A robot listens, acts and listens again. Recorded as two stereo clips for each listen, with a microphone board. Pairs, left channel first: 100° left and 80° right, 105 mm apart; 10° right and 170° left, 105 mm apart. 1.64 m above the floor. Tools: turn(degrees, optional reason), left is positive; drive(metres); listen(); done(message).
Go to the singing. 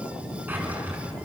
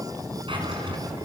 listen()
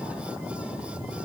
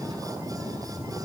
listen()
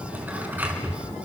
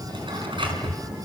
done("I can't make out singing to turn to.")